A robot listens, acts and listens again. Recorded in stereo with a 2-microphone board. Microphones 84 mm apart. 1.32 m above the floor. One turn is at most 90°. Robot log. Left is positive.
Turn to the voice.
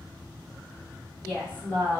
note: The woman speaking: about 30° left or 150° left.
cmd yaw +30
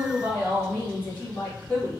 note: So it is at 115° left.
cmd yaw +90
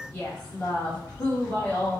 note: The woman speaking is now 20° left.
cmd yaw +20
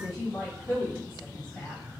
note: The woman speaking is now 10° left.
cmd yaw +10
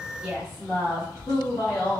end: Facing the woman speaking.